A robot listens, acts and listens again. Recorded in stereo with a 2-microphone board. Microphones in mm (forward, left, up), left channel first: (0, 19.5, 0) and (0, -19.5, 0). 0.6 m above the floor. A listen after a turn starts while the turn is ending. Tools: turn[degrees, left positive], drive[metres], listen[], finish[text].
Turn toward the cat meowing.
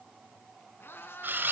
Action: turn[90]
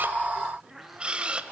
Action: finish[Facing the cat meowing, over 4 m away.]